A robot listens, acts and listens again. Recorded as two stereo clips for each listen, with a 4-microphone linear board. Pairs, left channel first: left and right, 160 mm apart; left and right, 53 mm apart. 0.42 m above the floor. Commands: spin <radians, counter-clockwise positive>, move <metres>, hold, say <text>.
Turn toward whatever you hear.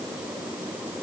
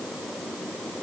hold
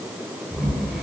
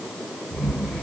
spin 0.52
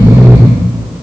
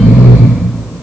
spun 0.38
spin -0.44
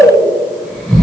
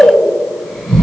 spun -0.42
say Facing the snoring.